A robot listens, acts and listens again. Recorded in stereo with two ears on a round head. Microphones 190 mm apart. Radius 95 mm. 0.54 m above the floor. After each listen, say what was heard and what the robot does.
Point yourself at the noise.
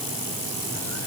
Keep listening.
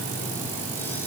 Keep listening.
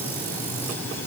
I can't make out anything to turn to.